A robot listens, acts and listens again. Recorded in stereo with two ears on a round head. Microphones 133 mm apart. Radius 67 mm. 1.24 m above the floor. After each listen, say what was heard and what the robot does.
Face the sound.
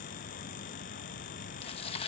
The tearing paper: about 40° left or 140° left. Turn 40° left.
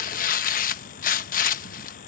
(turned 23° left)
So it is at 115° left. Turn 115° left.
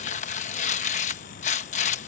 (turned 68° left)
The tearing paper is now 50° left. Turn 50° left.
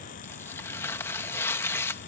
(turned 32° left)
The tearing paper is now 15° left. Turn 15° left.
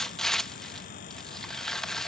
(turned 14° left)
Found it: tearing paper, straight ahead.